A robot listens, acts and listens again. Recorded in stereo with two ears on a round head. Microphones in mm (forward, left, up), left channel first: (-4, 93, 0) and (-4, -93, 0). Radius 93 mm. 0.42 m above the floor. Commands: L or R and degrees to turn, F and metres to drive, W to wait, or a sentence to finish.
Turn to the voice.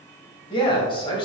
L25
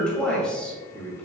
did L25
Found it: a man speaking, straight ahead.